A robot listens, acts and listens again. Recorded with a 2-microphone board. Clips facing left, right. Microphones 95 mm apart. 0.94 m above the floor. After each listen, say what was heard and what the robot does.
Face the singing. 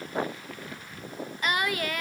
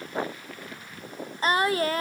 The singing: about 35° right or 145° right. Turn 35° right.
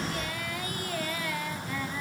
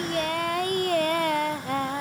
So it is at 105° right. Turn 105° right.
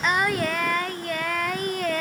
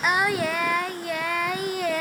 Found it: singing, straight ahead, under 1 m away.